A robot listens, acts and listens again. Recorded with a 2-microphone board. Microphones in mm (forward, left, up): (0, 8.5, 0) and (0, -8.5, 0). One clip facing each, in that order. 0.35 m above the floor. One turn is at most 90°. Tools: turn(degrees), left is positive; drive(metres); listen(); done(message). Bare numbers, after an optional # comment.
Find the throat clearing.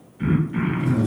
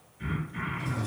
# The throat clearing: about 30° left or 150° left.
turn(30)
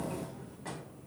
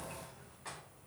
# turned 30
listen()
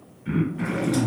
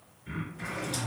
# So it is at 115° left.
turn(90)
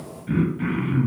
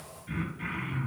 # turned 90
# The throat clearing is now 25° left.
turn(25)
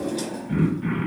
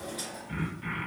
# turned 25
done("Found it: throat clearing, straight ahead.")